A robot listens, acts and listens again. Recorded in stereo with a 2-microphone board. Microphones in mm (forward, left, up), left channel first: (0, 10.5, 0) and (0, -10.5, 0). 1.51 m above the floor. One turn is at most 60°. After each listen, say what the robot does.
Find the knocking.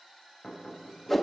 Turn 60° left.
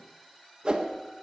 Keep listening.
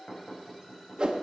Turn 45° left.
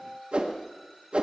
Keep listening.
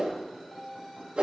Keep listening.
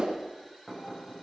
Facing the knocking, over 4 m away.